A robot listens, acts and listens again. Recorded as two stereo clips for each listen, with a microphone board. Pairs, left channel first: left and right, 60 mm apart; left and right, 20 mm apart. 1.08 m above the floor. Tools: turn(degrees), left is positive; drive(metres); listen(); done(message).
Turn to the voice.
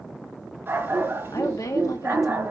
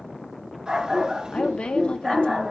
turn(degrees=65)
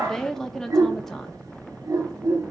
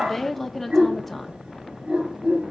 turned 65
done("Found it: a woman speaking, straight ahead, 1 to 2 m away.")